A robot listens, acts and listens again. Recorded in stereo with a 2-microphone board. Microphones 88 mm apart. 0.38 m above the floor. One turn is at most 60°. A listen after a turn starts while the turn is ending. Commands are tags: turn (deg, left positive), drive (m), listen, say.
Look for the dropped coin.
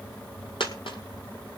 <turn deg="60"/>
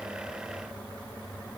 <listen/>
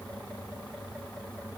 <say>I heard a dropped coin, but can't make it out now. It was about 5° left or 55° left.</say>